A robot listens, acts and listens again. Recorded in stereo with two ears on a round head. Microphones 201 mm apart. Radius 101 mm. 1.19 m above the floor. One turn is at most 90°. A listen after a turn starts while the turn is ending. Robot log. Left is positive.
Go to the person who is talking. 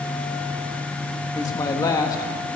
note: The man speaking: about 20° left or 160° left.
cmd yaw +20
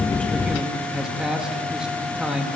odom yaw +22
cmd fwd 1.0
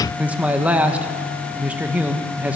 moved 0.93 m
note: The man speaking is now 10° right.
cmd yaw -10
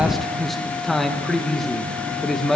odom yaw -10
cmd fwd 1.0
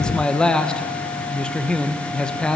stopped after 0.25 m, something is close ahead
end: I am next to the man speaking.